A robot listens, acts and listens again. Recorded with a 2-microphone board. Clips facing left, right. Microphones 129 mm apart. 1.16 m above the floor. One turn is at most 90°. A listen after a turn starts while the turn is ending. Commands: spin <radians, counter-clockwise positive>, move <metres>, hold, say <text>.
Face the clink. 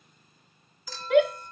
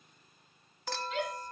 spin -1.13
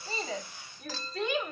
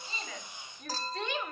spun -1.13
spin -0.79
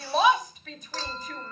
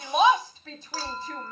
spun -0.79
spin -0.17
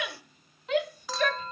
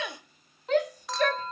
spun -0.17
say Found it: a clink, straight ahead.